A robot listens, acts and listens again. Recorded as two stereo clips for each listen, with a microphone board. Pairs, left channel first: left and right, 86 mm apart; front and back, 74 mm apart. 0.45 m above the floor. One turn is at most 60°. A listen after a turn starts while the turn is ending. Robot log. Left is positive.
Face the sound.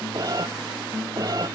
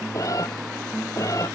note: The cat meowing: 45° right.
cmd yaw -45
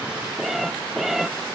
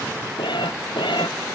end: Facing the cat meowing.